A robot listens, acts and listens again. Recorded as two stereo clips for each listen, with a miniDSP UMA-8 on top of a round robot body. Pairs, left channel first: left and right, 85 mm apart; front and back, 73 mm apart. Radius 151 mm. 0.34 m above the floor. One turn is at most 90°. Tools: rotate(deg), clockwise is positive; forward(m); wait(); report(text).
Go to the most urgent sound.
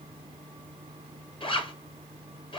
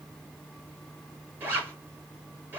wait()
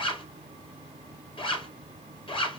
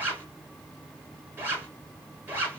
wait()
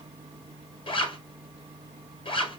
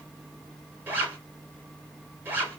report("I can't make out anything urgent, only a zipper.")